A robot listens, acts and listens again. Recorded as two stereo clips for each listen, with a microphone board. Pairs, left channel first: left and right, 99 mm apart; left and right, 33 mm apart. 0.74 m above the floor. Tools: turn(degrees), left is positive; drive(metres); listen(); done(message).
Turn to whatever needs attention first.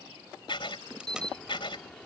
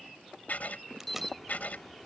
turn(degrees=30)
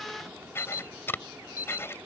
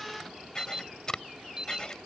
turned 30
turn(degrees=-25)
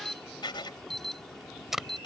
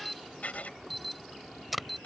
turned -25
done("Facing the alarm.")